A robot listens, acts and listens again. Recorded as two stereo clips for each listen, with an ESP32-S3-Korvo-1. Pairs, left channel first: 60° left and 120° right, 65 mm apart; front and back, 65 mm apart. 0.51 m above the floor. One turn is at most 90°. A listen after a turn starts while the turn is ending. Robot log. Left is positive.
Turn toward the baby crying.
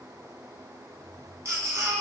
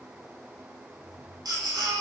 note: The baby crying: 170° right.
cmd yaw -90
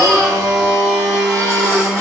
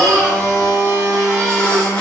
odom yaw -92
note: Nothing new. It was at 75° right.
cmd yaw -75
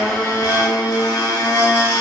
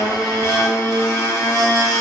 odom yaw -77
cmd idle
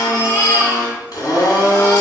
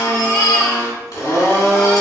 end: Facing the baby crying, 1 to 2 m away.